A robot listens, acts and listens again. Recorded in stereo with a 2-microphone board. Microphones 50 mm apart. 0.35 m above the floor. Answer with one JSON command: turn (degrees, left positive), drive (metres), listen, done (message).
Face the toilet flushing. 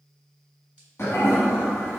{"turn": 55}
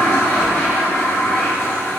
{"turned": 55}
{"turn": 65}
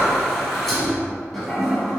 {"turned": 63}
{"done": "Found it: a toilet flushing, straight ahead."}